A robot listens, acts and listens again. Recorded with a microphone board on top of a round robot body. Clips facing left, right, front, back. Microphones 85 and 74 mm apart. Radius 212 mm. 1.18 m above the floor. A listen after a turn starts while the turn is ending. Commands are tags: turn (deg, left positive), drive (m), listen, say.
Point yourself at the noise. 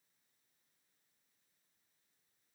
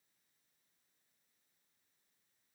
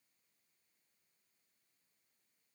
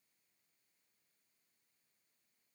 <listen/>
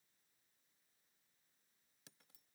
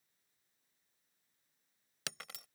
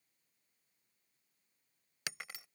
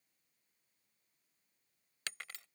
<turn deg="-80"/>
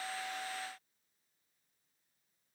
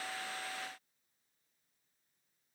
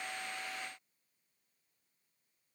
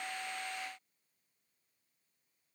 <say>I heard breaking glass from this way, but can't make it out now.</say>